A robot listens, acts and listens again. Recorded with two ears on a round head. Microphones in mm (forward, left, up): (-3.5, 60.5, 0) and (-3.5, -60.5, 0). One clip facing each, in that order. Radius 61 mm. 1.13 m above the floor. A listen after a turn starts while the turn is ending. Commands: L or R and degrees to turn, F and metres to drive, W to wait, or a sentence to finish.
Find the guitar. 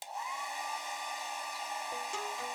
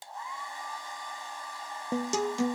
R50
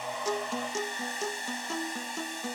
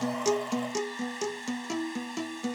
R10
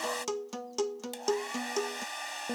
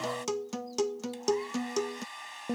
Found it: a guitar, straight ahead.